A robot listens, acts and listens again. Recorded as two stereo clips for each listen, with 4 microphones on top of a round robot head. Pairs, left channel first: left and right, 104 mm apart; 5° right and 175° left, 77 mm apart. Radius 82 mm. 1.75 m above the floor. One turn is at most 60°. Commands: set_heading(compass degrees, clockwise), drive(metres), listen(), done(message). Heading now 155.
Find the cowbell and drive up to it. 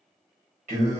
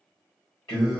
listen()
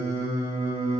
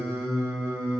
listen()
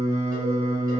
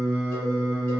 done("I can't make out a cowbell to turn to.")